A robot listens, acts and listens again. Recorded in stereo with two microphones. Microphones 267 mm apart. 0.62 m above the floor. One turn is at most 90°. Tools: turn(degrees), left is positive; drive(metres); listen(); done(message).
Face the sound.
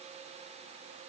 listen()
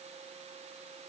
listen()
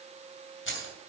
turn(degrees=50)
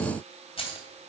turn(degrees=20)
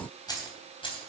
turn(degrees=20)
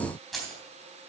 done("Found it: keys jangling, straight ahead.")